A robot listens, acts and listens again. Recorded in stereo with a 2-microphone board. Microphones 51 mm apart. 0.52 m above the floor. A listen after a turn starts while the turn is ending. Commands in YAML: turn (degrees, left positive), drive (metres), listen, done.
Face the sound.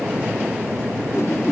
turn: 90
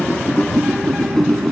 done: "Found it: a whoosh, straight ahead, 1 to 2 m away."